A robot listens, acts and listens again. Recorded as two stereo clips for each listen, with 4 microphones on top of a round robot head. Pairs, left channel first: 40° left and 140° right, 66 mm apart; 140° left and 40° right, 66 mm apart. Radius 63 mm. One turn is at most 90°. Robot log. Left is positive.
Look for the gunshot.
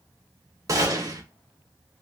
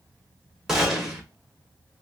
note: The gunshot: 120° right.
cmd yaw -90
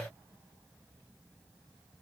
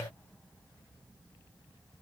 note: Nothing new. It was at 30° right.
cmd yaw -30
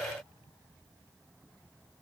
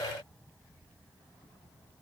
end: I heard a gunshot from this way, but can't make it out now.